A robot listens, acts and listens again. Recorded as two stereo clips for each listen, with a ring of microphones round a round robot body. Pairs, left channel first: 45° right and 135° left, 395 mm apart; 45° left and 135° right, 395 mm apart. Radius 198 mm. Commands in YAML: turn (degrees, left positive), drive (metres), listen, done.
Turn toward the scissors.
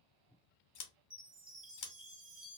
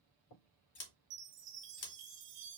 done: "Facing the scissors."